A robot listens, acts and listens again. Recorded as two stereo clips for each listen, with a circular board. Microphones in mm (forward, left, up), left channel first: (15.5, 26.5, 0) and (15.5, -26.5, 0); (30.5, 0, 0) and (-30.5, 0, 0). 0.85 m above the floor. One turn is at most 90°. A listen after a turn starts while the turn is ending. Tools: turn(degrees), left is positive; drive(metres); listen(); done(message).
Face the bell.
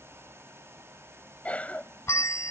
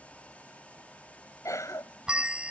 turn(degrees=90)
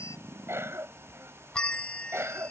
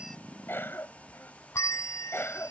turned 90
turn(degrees=20)
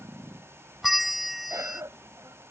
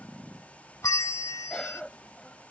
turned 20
done("Found it: a bell, straight ahead.")